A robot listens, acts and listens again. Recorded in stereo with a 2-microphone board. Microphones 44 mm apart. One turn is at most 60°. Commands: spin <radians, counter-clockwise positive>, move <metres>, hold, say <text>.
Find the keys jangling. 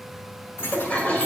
spin 1.05
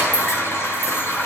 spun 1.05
spin 0.79
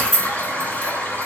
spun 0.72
spin 0.17
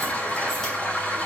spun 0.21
hold
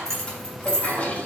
spin 0.26
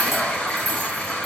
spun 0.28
hold
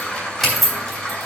say Found it: keys jangling, straight ahead, 2 to 4 m away.